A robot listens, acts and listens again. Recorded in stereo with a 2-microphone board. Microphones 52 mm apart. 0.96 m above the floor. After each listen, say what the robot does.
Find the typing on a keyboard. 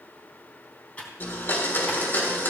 Turn 25° left.
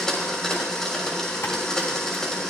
Keep listening.
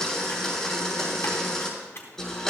Turn 125° left.
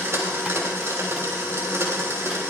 Keep listening.
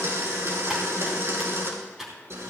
Turn 10° right.
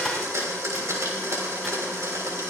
Keep listening.
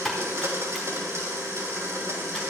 Found it: typing on a keyboard, straight ahead, 2 to 4 m away.